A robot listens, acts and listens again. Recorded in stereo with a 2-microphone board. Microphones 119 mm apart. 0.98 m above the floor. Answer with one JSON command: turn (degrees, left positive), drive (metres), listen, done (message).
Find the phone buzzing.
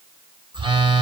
{"turn": -40}
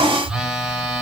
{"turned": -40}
{"done": "Found it: a phone buzzing, straight ahead, under 1 m away."}